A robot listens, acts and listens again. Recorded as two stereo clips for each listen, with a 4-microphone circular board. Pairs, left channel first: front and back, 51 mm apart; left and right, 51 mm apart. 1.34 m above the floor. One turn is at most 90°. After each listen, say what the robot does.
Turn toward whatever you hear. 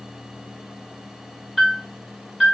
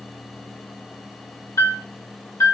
Turn 90° left.
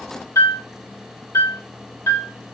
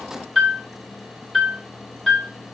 Facing the piano.